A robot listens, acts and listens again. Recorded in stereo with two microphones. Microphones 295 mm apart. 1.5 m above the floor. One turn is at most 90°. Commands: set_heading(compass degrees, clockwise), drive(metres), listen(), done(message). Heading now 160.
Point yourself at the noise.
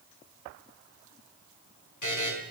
set_heading(70)
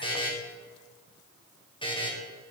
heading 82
set_heading(67)
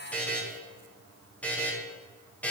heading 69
done("Facing the buzzer.")